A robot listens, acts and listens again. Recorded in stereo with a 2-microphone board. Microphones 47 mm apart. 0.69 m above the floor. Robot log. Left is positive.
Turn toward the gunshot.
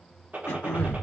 note: The gunshot: about 35° right or 145° right.
cmd yaw -35
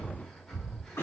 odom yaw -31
cmd idle
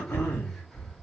end: I heard a gunshot, but can't make it out now. It was about 5° right or 115° right.